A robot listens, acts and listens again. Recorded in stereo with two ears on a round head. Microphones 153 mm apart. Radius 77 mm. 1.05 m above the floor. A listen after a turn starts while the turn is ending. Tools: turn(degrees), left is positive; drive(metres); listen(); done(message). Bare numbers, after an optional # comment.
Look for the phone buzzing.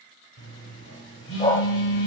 turn(90)
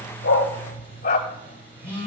# So it is at 10° right.
turn(-10)
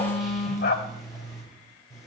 done("Facing the phone buzzing, over 4 m away.")